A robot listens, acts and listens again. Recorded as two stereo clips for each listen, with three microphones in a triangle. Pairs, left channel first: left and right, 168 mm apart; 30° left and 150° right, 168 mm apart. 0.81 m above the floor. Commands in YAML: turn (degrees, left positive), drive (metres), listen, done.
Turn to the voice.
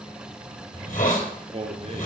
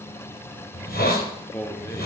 turn: -45
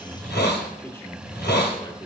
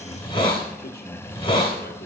turn: 25
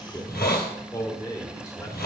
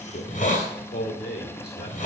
turn: 20
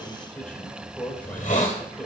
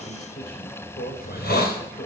done: "Found it: a man speaking, straight ahead, 2 to 4 m away."